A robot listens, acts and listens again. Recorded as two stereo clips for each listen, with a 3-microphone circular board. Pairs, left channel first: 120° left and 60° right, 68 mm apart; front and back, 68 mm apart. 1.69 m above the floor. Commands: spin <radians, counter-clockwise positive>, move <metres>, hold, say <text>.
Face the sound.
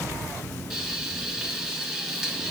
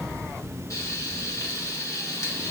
spin 0.61
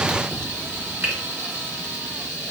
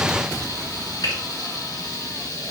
say Found it: frying, straight ahead, 2 to 4 m away.